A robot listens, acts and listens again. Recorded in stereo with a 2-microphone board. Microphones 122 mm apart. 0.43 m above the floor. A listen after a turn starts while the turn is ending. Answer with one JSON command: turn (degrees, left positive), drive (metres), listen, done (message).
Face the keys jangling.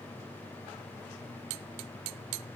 {"listen": true}
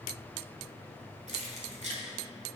{"turn": -70}
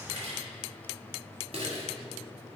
{"turn": -55}
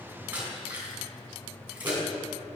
{"turn": -15}
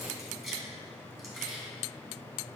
{"done": "Found it: keys jangling, straight ahead."}